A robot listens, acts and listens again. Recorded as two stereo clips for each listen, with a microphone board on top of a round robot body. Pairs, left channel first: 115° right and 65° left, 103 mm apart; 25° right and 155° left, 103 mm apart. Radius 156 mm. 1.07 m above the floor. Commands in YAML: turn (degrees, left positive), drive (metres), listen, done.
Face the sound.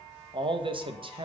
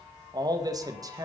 turn: 100
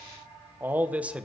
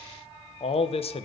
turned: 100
turn: -10
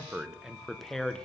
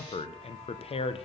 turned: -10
turn: -30
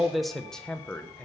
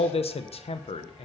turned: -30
turn: -40
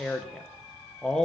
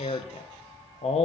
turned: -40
turn: -30
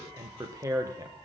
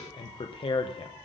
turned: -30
turn: 10
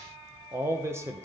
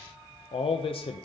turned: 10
done: "Found it: a man speaking, straight ahead."